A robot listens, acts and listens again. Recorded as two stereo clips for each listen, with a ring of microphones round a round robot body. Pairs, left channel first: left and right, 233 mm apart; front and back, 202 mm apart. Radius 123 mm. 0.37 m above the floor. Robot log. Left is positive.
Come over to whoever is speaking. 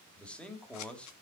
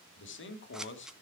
cmd fwd 1.0
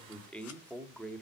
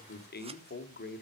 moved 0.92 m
cmd fwd 1.0
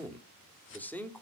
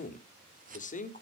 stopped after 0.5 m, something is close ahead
note: The man speaking is now 10° left.
cmd yaw +10
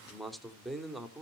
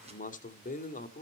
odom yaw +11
end: Arrived at the man speaking, straight ahead.